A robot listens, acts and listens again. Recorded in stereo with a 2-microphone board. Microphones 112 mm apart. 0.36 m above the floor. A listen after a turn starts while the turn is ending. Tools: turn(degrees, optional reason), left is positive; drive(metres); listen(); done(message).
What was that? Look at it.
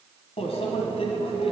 turn(degrees=65, reason="The microwave: about 65° left or 115° left.")
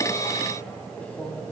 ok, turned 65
turn(degrees=15, reason="So it is at 15° left.")
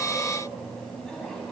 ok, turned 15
done("Found it: a microwave, straight ahead.")